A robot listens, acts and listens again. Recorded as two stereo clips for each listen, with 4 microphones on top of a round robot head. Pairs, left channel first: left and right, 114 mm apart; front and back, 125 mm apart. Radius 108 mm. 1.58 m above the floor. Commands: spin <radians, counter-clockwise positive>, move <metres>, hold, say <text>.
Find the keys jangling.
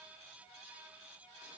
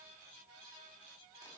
hold
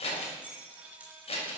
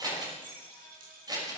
spin -2.88
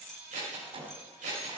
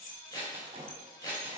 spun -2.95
spin 0.17
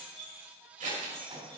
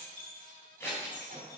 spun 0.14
say Facing the keys jangling, over 4 m away.